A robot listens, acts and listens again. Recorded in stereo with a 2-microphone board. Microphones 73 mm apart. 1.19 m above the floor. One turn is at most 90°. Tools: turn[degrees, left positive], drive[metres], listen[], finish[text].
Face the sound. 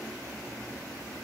Action: listen[]
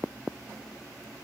Action: listen[]
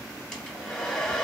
Action: turn[30]
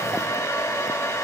Thought: So it is at 140° left.
Action: turn[90]
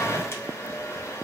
Thought: The hair dryer is now 35° left.
Action: turn[35]
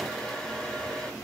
Action: finish[Facing the hair dryer, 2 to 4 m away.]